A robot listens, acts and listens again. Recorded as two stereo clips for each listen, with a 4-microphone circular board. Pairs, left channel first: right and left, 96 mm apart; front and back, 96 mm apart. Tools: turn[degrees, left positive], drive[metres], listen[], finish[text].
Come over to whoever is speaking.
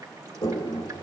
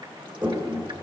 Action: listen[]
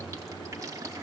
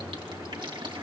Action: listen[]
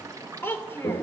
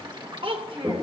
Thought: The child speaking: 155° right.
Action: turn[-155]
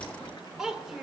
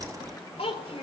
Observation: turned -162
Action: drive[1.0]
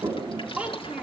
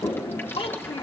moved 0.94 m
Thought: The child speaking is now 15° left.
Action: turn[15]
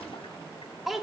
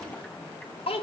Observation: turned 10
Action: drive[1.0]
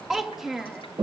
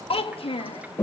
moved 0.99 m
Action: drive[1.0]
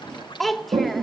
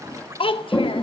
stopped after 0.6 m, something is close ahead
Action: finish[I am next to the child speaking.]